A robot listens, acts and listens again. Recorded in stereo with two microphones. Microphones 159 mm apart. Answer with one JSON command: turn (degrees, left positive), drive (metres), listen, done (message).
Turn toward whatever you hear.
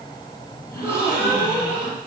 {"turn": 30}
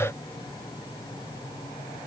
{"listen": true}
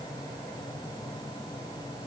{"done": "I heard a gasp, but can't make it out now. It was about 15° right or 135° left."}